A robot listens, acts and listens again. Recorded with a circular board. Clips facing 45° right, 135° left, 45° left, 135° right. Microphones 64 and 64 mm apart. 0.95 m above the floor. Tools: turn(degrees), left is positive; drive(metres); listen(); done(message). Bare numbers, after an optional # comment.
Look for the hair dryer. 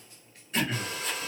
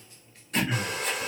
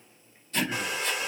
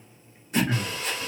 # The hair dryer: 115° left.
turn(115)
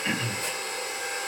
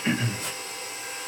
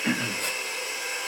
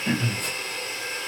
# The hair dryer is now 25° right.
turn(-25)
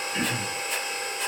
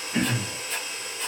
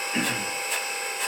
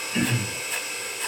done("Facing the hair dryer.")